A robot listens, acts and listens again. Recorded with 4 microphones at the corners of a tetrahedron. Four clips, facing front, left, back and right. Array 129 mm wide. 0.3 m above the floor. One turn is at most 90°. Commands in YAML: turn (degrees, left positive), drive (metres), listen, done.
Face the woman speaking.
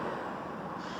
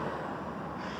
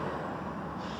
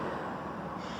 listen: true
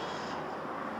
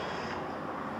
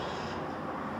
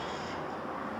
listen: true
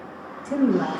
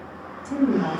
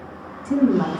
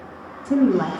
turn: -90
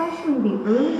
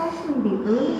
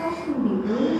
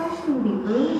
done: "Found it: a woman speaking, straight ahead."